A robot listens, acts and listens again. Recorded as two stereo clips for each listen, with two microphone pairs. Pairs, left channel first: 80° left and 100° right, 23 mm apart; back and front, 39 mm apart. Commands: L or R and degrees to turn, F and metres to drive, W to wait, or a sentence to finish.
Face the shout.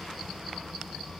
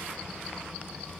W
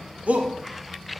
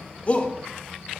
R120
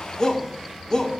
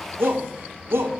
L20
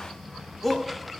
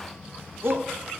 Found it: a shout, straight ahead, 1 to 2 m away.